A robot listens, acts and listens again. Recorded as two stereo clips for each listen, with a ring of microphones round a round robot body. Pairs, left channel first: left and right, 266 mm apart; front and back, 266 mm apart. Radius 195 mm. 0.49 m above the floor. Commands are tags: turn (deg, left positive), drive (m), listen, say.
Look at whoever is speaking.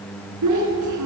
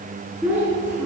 <turn deg="-95"/>
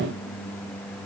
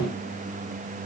<listen/>
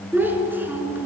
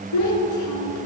<say>Facing the child speaking, 2 to 4 m away.</say>